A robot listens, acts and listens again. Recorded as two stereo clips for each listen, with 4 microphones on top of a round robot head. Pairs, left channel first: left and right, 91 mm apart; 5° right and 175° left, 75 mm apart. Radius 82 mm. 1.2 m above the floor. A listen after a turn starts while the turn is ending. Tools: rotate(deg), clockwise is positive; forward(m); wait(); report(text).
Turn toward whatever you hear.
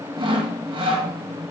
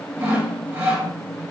rotate(120)
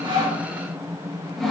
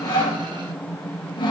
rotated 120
report("Facing the sawing, 2 to 4 m away.")